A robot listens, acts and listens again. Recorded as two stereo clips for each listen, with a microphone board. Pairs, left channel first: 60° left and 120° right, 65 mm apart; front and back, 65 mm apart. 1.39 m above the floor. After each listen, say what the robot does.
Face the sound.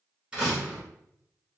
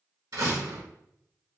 Turn 160° left.
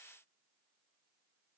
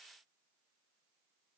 Facing where the door slam came from. I can't hear it now.